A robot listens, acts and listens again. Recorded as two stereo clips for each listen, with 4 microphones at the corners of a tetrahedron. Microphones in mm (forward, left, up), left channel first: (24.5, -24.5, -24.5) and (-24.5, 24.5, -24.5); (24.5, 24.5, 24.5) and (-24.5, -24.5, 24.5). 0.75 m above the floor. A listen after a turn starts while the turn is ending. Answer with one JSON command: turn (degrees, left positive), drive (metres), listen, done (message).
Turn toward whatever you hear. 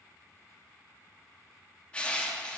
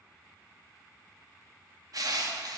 {"turn": -115}
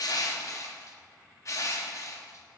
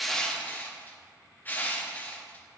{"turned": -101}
{"turn": -15}
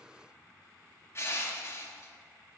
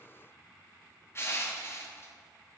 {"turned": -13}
{"done": "Facing the crushing."}